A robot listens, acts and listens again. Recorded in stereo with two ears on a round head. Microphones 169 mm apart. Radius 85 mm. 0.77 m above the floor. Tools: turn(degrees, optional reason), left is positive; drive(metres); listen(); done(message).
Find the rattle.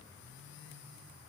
listen()
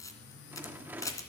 turn(degrees=-30)
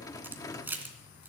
turn(degrees=20, reason="So it is at 20° left.")
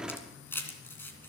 done("Found it: a rattle, straight ahead, under 1 m away.")